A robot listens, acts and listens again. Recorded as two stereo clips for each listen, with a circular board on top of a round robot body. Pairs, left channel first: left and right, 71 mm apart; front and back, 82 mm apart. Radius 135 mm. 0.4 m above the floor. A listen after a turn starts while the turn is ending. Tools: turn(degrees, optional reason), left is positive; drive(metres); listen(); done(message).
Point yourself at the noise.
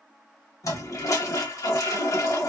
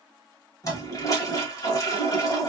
turn(degrees=50, reason="The toilet flushing: 50° left.")
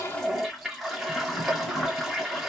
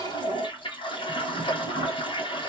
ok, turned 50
done("Facing the toilet flushing, 1 to 2 m away.")